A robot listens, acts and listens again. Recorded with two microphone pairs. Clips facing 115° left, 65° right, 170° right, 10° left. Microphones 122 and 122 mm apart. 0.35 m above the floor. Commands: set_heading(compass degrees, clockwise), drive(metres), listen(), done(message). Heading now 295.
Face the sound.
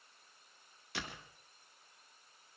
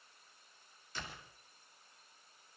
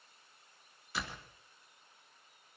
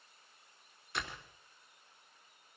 set_heading(195)
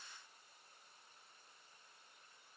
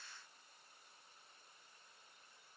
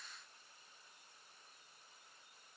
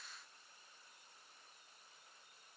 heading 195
done("I heard a door slam from this way, but can't make it out now.")